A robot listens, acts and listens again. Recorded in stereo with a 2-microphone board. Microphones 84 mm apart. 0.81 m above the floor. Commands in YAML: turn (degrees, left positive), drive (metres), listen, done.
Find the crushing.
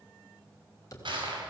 turn: -70
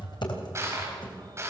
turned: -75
turn: -30
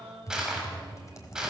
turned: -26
done: "Facing the crushing, over 4 m away."